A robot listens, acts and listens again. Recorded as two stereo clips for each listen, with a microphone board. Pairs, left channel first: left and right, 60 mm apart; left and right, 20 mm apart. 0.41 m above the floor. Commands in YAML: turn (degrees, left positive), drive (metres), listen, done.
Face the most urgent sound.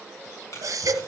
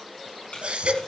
turn: -70
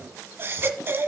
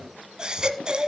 turn: -40
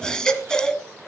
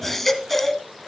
turn: 10
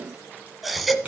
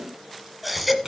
done: "Facing the baby crying, 1 to 2 m away."